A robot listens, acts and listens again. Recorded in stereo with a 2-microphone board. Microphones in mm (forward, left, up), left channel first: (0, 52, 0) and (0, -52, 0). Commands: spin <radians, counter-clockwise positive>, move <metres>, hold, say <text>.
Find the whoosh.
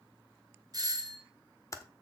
hold
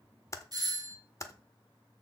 hold
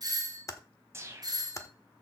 spin -0.52
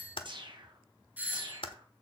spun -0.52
spin -2.09
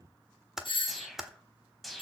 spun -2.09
say Found it: a whoosh, straight ahead, 1 to 2 m away.